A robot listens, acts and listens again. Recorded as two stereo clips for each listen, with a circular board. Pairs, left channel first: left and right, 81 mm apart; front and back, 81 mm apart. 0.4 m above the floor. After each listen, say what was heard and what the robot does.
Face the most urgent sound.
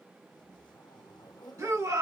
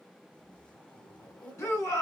The shout: 50° right. Turn 50° right.
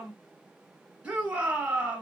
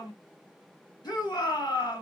The shout is now 15° right. Turn 15° right.
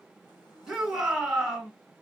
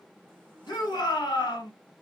The shout is now 10° right. Turn 10° right.
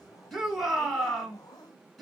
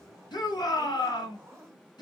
Facing the shout.